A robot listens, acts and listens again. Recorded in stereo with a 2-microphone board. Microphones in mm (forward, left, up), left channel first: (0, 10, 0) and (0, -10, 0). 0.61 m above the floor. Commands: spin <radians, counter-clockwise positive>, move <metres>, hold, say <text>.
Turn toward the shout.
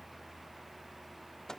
hold
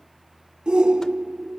spin -0.87
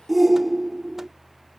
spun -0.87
spin -0.17
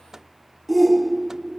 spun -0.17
say Facing the shout.